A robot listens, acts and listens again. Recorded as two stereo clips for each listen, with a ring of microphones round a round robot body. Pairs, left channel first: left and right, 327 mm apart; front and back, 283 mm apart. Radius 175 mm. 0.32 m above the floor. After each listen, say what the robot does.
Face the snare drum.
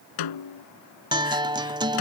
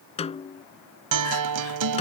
Turn 70° left.
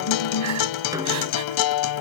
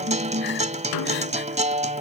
Keep listening.
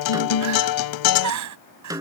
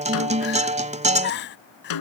Turn 10° right.
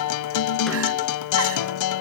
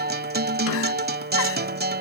Keep listening.
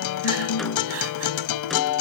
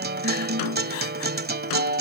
Keep listening.
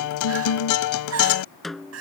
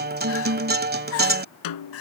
Facing the snare drum.